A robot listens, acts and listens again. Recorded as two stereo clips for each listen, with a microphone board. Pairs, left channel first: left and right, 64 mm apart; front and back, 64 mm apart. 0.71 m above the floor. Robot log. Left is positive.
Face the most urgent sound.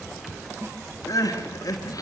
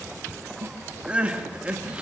note: The crying: 110° left.
cmd yaw +110
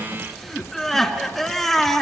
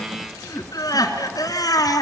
end: Found it: crying, straight ahead, 2 to 4 m away.